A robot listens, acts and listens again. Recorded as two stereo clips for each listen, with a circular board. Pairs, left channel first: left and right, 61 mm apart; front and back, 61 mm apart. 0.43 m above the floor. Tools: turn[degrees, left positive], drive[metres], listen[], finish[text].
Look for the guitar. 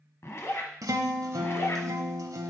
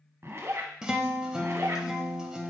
Thought: The guitar: 100° right.
Action: turn[-100]
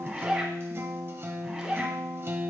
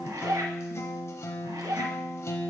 Thought: The guitar is now 40° right.
Action: turn[-40]
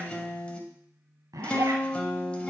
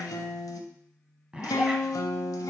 Thought: The guitar is now 20° left.
Action: turn[20]
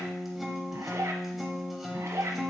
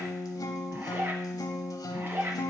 Action: finish[Facing the guitar.]